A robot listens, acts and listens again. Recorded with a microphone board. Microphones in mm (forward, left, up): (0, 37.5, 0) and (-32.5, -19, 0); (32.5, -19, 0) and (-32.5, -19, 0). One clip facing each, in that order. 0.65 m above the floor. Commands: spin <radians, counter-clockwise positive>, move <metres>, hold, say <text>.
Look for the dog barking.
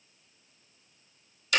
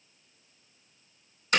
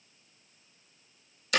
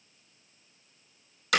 hold
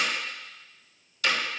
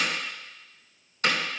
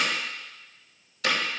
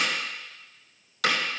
hold
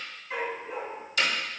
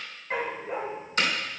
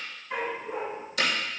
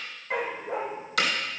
spin -3.05
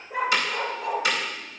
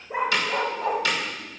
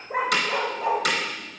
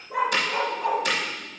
spin -1.13
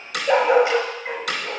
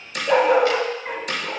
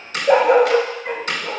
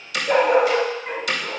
spin -0.17
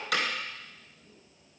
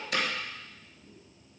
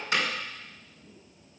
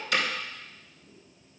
hold
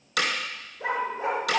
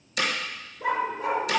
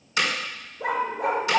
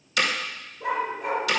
say Facing the dog barking, 1 to 2 m away.